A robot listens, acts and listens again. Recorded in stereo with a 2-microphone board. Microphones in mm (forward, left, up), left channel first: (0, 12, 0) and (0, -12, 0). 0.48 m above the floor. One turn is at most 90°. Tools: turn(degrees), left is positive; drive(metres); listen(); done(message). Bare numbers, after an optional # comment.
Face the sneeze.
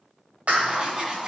listen()
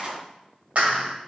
listen()
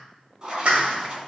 done("I can't make out a sneeze, only a clap and writing.")